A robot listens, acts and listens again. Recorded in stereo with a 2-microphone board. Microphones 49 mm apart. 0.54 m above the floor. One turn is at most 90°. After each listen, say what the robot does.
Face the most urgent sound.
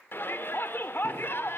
Turn 45° left.
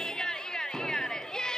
Turn 15° left.
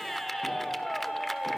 Found it: a shout, straight ahead, 1 to 2 m away.